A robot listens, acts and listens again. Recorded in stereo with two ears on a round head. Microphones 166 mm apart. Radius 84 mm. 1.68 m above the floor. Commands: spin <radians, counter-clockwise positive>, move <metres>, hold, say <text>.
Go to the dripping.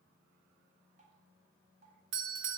spin -0.70
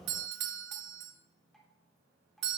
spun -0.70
move 1.0
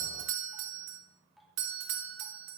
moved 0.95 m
move 1.0
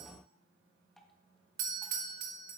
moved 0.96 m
move 1.0
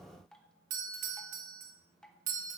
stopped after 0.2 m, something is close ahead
say Arrived at the dripping, straight ahead.